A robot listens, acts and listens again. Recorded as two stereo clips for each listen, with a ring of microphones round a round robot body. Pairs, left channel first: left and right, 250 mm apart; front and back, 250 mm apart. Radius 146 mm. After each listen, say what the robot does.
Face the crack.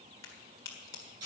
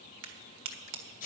Turn 170° left.
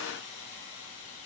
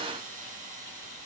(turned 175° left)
I heard a crack from this way, but can't make it out now.